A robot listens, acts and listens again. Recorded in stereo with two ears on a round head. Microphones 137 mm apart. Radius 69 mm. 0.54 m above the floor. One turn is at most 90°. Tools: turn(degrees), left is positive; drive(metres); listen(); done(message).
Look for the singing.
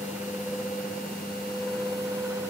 listen()
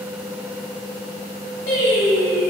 turn(degrees=90)
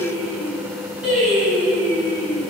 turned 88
done("Facing the singing.")